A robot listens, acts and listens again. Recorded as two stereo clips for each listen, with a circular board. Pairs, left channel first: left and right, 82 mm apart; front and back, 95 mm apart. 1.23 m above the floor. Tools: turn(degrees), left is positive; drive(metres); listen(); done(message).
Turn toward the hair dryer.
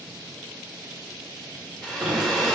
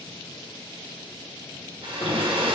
turn(degrees=170)
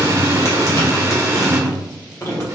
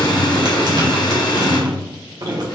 listen()
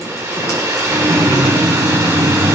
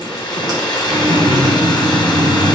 turn(degrees=-40)
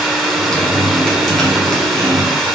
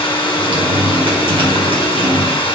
done("Facing the hair dryer, under 1 m away.")